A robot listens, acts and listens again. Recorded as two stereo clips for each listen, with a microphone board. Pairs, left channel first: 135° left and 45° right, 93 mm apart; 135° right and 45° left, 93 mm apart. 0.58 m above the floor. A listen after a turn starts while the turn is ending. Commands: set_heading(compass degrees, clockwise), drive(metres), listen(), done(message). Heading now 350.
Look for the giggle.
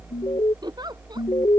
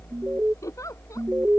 set_heading(70)
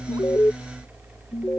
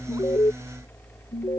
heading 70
listen()
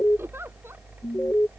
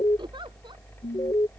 listen()
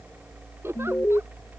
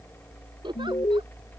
set_heading(50)
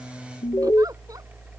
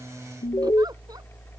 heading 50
listen()
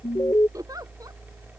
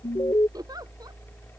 done("Found it: a giggle, straight ahead.")